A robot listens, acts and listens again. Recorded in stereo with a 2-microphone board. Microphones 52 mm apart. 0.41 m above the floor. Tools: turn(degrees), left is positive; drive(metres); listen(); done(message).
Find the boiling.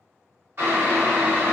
turn(degrees=-50)
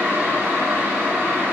turn(degrees=-65)
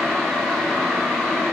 turn(degrees=10)
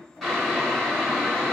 done("Found it: boiling, straight ahead.")